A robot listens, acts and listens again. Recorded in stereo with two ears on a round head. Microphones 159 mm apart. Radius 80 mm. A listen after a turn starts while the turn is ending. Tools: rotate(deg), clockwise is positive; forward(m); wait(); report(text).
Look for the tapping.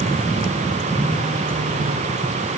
wait()
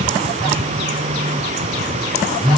wait()
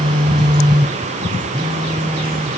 report("I can't make out tapping, only a phone buzzing.")